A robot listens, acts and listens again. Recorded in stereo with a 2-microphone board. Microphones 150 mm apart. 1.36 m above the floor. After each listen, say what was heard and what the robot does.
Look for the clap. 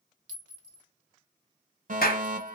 Turn 90° left.
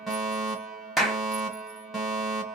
Found it: a clap, straight ahead, under 1 m away.